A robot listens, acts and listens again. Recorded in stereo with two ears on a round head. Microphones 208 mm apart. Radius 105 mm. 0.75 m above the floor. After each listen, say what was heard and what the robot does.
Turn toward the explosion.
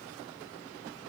Keep listening.
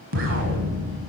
The explosion: about 60° right or 120° right. Turn 60° right.
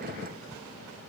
Keep listening.
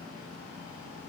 I heard an explosion, but can't make it out now. It was about straight ahead or 60° right.